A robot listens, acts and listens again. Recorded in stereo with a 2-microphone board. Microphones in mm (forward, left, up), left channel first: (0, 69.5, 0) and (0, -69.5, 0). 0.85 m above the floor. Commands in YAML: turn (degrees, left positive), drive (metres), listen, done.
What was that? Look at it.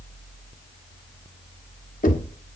turn: 90
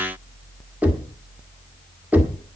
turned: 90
turn: -10
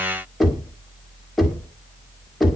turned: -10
done: "Found it: knocking, straight ahead."